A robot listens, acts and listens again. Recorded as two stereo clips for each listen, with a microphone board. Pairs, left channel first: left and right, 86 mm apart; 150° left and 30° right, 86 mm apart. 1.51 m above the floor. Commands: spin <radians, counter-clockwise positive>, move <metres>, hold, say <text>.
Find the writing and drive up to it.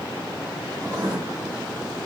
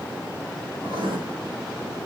spin -0.70
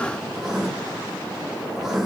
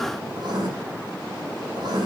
move 1.0
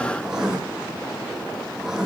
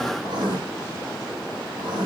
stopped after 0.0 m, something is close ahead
say Blocked. The writing is further on, straight ahead.